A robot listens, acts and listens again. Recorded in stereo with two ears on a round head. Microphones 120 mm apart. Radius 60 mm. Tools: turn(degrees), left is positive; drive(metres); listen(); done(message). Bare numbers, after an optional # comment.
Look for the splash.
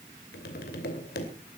listen()
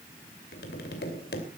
listen()
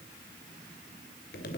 done("I can't make out a splash, only tapping.")